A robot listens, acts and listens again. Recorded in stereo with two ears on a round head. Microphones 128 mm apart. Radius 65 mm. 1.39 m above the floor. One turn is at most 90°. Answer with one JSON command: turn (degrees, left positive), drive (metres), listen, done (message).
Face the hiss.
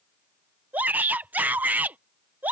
{"listen": true}
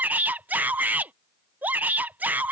{"listen": true}
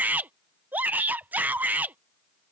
{"done": "I can't make out a hiss to turn to."}